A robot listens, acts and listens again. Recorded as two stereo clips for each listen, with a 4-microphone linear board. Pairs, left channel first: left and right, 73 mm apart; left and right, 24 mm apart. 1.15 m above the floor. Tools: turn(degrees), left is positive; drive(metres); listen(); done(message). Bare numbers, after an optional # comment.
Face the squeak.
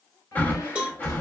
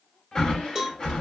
# The squeak: about 55° left or 125° left.
turn(55)
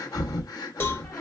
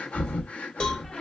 # So it is at 50° left.
turn(50)
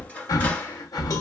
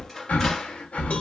# The squeak is now 20° left.
turn(20)
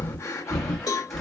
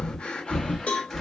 listen()
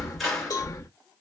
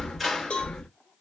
done("Found it: a squeak, straight ahead.")